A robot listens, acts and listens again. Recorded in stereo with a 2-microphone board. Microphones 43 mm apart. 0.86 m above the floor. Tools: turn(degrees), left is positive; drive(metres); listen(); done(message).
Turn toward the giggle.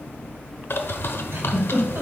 turn(degrees=-90)
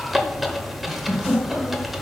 turn(degrees=-15)
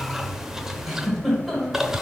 done("Found it: a giggle, straight ahead, 2 to 4 m away.")